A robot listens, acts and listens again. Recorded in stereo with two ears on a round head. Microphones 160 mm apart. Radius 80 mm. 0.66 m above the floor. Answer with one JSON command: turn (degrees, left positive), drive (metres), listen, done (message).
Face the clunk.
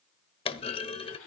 {"turn": 30}
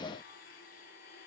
{"listen": true}
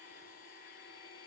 {"done": "I heard a clunk, but can't make it out now. It was about straight ahead or 120° left."}